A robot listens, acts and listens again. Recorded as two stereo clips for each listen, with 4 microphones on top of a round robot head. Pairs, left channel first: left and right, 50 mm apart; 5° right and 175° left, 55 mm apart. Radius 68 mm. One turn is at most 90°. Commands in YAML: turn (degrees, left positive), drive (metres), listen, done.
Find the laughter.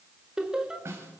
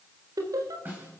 turn: -90
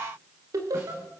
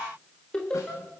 turn: -85
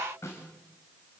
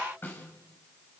listen: true
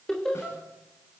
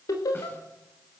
done: "Facing the laughter."